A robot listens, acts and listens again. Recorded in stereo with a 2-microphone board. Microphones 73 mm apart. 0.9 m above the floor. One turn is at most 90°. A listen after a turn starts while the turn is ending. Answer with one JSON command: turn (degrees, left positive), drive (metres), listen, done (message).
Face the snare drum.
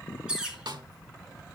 {"turn": -70}
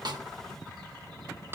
{"turn": -35}
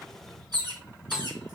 {"listen": true}
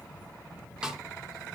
{"turn": -10}
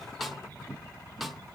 {"done": "Found it: a snare drum, straight ahead."}